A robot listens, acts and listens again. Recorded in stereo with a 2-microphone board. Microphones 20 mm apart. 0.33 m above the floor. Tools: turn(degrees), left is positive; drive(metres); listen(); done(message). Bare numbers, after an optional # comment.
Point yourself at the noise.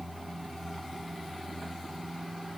listen()
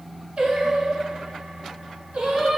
# The singing: about 70° right or 110° right.
turn(-70)
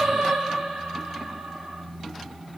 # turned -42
# So it is at 65° right.
turn(-65)
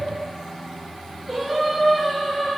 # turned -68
done("Facing the singing, 1 to 2 m away.")